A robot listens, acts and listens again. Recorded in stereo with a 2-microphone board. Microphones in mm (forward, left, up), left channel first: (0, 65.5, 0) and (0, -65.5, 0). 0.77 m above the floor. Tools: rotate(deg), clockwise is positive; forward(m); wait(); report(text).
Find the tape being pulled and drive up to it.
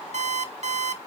wait()
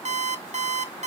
wait()
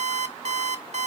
report("I can't make out tape being pulled to turn to.")